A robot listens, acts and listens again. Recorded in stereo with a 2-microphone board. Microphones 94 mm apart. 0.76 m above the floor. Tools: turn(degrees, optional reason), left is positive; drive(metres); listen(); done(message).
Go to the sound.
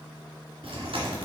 turn(degrees=-90)
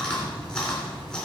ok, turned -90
turn(degrees=10, reason="So it is at 10° left.")
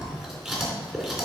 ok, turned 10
drive(metres=1.0)
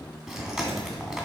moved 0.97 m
drive(metres=1.0)
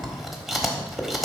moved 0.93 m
drive(metres=1.0)
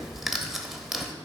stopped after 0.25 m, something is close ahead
done("Arrived at the chewing, straight ahead.")